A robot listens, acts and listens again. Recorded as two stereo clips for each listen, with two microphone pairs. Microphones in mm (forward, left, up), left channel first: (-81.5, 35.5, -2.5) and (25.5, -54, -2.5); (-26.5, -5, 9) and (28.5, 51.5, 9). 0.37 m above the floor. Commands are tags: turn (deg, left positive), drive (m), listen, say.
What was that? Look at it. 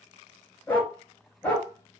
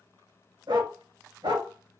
<turn deg="60"/>
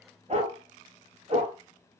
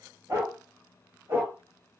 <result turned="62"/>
<turn deg="-10"/>
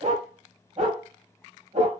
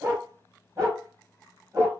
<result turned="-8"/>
<say>Facing the dog barking.</say>